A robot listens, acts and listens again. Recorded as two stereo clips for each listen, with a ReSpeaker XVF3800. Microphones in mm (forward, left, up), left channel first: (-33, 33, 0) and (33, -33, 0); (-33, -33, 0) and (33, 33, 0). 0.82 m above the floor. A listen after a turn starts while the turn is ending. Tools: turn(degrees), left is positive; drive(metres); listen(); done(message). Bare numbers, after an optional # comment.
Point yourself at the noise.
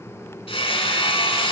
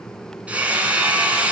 # The hammering: 120° left.
turn(120)
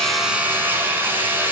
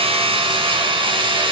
# The hammering is now 25° left.
turn(25)
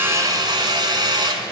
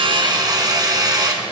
done("Facing the hammering, 2 to 4 m away.")